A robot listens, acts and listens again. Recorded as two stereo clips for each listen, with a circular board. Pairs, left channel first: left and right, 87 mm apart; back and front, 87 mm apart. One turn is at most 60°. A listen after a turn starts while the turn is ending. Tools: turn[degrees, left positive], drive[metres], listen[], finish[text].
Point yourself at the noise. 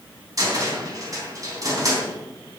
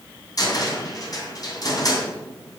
Thought: The cupboard door: 135° right.
Action: turn[-60]
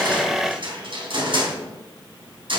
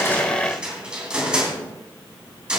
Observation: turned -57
Thought: The cupboard door is now 75° right.
Action: turn[-60]
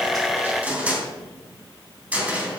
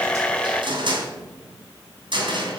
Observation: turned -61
Thought: The cupboard door is now 15° right.
Action: turn[-15]
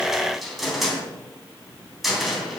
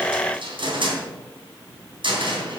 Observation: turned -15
Action: finish[Facing the cupboard door.]